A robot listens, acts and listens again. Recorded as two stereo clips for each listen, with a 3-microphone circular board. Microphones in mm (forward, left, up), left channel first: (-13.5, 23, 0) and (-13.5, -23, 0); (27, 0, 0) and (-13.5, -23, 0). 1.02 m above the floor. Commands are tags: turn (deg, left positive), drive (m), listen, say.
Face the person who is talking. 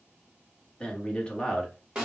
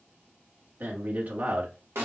<turn deg="160"/>
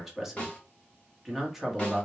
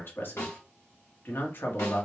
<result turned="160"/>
<say>Found it: a man speaking, straight ahead.</say>